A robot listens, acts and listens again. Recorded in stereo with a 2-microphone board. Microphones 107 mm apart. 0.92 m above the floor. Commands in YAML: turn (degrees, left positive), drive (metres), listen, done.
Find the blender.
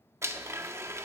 turn: -25
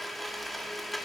done: "Found it: a blender, straight ahead, 1 to 2 m away."